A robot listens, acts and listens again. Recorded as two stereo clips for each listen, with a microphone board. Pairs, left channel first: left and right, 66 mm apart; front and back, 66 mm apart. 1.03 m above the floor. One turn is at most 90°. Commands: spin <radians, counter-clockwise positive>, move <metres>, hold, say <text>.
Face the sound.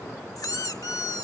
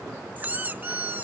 spin 1.57
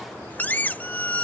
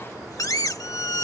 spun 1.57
spin 0.44
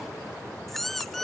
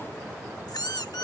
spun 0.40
say Found it: a squeak, straight ahead.